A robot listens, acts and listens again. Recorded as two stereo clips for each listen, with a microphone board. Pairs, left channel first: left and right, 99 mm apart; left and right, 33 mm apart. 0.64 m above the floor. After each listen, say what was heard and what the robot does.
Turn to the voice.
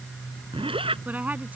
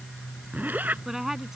The woman speaking: about 15° right or 165° right. Turn 15° right.
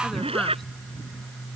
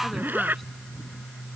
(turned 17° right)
Keep listening.
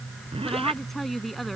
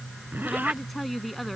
Found it: a woman speaking, straight ahead.